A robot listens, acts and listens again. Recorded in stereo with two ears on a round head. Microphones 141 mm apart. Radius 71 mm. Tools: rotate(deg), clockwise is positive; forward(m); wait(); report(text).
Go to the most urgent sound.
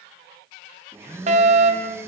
rotate(50)
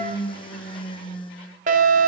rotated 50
rotate(70)
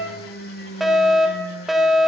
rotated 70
forward(1.0)
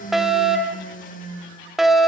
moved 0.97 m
forward(1.0)
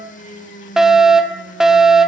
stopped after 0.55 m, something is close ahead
report("Arrived at the fire alarm, straight ahead.")